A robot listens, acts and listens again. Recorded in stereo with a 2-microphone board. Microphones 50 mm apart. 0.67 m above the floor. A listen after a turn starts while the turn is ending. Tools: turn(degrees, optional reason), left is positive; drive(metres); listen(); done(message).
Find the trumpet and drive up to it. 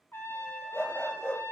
turn(degrees=50, reason="The trumpet: about 50° left or 130° left.")
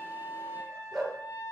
turn(degrees=80, reason="So it is at 80° left.")
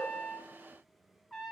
drive(metres=1.0)
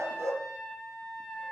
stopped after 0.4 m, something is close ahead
done("Blocked. The trumpet is further on, straight ahead.")